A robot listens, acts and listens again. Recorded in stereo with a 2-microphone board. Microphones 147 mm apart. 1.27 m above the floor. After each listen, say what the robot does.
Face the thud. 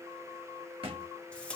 Turn 40° right.
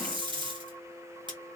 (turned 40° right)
Keep listening.
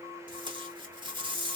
I heard a thud, but can't make it out now. It was about straight ahead or 100° right.